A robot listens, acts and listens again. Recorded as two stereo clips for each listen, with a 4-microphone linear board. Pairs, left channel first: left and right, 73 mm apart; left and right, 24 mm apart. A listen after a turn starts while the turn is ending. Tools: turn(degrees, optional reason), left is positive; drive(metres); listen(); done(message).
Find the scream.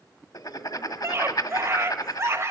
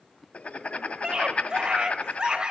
turn(degrees=-40, reason="The scream: about 40° right or 140° right.")
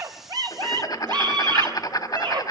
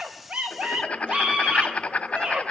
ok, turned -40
turn(degrees=-100, reason="So it is at 100° right.")
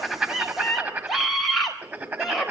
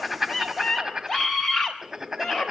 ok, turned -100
done("Found it: a scream, straight ahead.")